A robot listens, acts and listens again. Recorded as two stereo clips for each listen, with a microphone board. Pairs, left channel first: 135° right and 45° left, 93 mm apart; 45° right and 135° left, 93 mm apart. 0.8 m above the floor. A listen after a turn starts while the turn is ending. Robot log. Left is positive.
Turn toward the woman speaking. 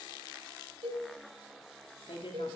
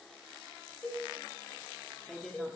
note: The woman speaking: 130° right.
cmd yaw -130
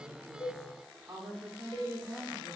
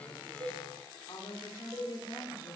note: The woman speaking is now 20° right.
cmd yaw -20
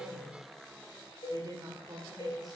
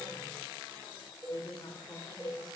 end: Facing the woman speaking.